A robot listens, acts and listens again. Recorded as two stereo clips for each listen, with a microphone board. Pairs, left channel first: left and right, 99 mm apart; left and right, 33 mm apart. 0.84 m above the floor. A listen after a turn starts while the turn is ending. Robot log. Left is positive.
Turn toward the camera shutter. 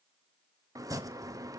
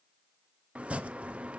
cmd idle
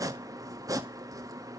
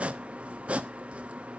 cmd idle
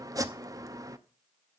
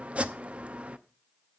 end: I can't make out a camera shutter, only chopping.